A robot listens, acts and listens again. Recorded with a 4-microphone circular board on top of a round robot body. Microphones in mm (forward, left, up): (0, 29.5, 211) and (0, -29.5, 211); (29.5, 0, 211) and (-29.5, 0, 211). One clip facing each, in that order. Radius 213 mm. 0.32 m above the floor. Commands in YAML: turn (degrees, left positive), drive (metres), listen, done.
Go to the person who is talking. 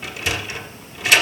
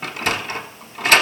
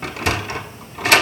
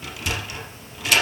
listen: true
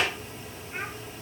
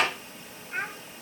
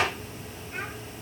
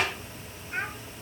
turn: -130
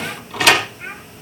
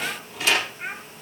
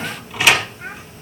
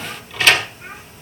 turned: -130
turn: -10
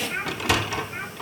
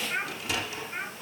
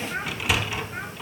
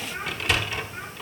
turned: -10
drive: 1.0
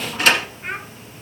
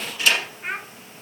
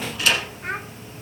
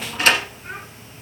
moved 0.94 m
drive: 1.0
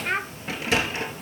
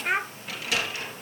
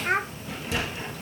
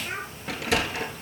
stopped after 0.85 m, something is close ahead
turn: -10
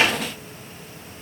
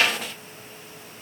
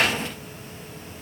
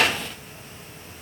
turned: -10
listen: true
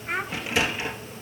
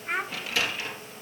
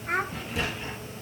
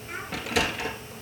done: "Arrived at the child speaking, straight ahead."